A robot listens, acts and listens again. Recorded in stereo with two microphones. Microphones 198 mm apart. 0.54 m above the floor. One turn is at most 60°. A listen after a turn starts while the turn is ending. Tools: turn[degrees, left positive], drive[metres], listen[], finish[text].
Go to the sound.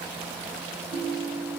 Thought: The ringtone: about 50° right or 130° right.
Action: turn[-50]
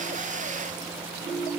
Thought: So it is at 80° right.
Action: turn[-60]
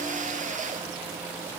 Thought: Nothing new. It was at 20° right.
Action: turn[-20]
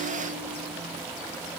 Action: listen[]
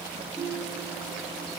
Action: drive[1.0]
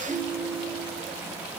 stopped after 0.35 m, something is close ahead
Action: finish[Something is in my way. I am facing the ringtone but have not reached it.]